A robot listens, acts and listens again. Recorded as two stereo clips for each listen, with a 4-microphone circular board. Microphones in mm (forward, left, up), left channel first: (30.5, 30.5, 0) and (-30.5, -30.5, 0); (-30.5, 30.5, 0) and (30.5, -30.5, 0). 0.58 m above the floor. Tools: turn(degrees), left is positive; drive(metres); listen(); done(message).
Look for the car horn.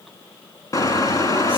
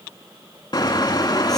turn(degrees=95)
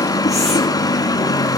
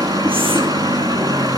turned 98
done("Found it: a car horn, straight ahead, 2 to 4 m away.")